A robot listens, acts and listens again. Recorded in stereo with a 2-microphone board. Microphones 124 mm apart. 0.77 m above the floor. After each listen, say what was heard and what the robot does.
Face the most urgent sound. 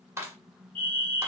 Turn 30° left.
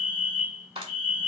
So it is at 15° right. Turn 15° right.
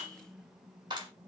Keep listening.
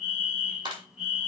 Facing the fire alarm.